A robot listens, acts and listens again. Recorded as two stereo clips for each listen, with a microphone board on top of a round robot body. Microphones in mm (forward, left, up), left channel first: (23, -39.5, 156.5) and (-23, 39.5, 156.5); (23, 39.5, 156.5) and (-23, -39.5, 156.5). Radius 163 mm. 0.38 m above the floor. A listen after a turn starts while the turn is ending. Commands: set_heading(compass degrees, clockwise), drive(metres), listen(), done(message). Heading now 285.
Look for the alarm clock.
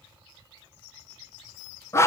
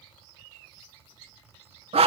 listen()
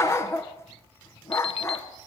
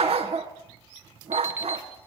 set_heading(335)
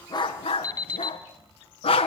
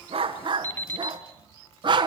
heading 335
set_heading(345)
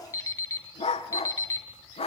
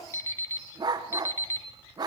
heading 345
done("Found it: an alarm clock, straight ahead, 1 to 2 m away.")